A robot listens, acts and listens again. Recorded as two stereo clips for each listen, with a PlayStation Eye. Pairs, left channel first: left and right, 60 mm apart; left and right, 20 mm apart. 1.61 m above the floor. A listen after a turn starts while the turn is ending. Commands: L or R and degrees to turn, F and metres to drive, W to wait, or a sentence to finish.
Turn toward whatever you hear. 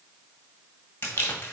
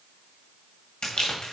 L35
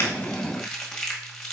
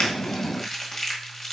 Found it: crumpling, straight ahead.